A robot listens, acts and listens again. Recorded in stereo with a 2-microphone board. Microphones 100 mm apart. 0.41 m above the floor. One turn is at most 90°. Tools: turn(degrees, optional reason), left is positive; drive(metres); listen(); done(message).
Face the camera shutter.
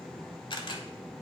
turn(degrees=50, reason="The camera shutter: about 50° left or 130° left.")
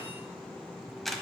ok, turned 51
done("Found it: a camera shutter, straight ahead.")